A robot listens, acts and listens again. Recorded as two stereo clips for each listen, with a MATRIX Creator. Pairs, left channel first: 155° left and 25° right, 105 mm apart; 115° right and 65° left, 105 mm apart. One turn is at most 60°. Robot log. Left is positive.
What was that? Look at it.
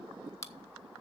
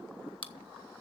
note: The chewing: 145° right.
cmd yaw -60
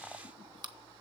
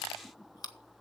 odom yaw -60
note: The chewing is now 65° right.
cmd yaw -60
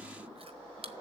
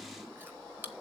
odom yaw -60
end: Facing the chewing.